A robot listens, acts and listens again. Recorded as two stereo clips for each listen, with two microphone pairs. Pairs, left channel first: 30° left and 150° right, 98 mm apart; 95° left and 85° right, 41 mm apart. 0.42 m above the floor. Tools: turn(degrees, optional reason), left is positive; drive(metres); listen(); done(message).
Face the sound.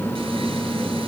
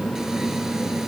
listen()
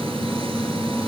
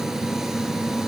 listen()
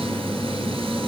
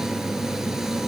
done("I can't make out anything.")